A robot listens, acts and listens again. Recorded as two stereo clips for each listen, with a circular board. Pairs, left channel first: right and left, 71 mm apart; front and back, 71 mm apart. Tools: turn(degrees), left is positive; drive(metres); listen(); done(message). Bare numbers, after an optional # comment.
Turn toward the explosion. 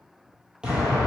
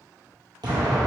# The explosion: 165° left.
turn(165)
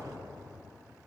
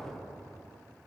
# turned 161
done("I heard an explosion from this way, but can't make it out now.")